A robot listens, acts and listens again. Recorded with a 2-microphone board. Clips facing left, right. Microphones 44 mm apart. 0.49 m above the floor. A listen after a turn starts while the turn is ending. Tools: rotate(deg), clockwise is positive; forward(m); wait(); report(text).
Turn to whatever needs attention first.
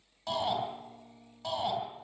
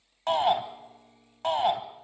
rotate(60)
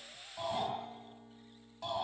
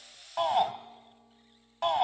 rotate(60)
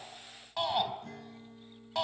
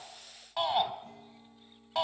report("Found it: a shout, straight ahead.")